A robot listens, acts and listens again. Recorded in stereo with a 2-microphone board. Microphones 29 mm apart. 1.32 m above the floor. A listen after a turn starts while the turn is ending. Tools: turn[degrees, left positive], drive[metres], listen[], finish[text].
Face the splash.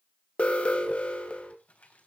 Action: listen[]
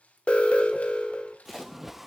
Action: turn[-30]
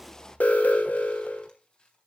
Action: listen[]
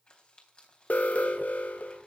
Action: finish[I heard a splash, but can't make it out now. It was about 20° left or 140° right.]